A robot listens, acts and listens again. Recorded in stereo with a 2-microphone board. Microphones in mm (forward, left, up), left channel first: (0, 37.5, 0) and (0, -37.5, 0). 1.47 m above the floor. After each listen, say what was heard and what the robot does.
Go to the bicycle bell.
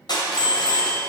The bicycle bell: about 25° left or 155° left. Turn 25° left.
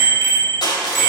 Drive 1.0 m forward.
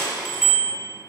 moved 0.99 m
Drive 1.0 m forward.
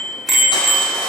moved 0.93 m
Drive 1.0 m forward.
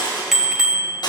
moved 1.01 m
Drive 1.0 m forward.
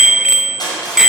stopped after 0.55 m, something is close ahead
The bicycle bell is now 10° right. Turn 10° right.
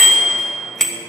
Arrived at the bicycle bell, straight ahead.